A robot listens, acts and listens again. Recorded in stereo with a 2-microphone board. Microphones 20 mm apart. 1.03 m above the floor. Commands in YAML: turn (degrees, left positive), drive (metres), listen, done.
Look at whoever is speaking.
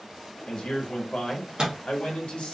turn: 55
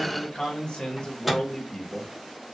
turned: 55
turn: 65
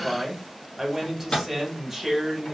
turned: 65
done: "Facing the man speaking."